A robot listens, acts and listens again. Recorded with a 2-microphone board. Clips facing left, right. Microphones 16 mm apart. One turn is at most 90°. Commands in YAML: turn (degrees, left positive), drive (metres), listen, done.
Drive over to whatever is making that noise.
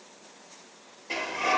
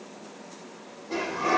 turn: 75
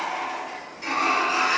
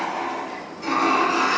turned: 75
turn: 30
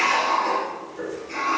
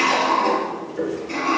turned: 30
turn: -15
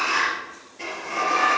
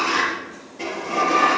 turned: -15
drive: 1.0
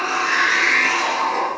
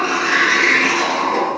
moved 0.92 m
drive: 1.0
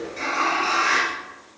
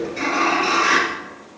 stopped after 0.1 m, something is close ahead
done: "Something is in my way. I am facing the sliding door but have not reached it."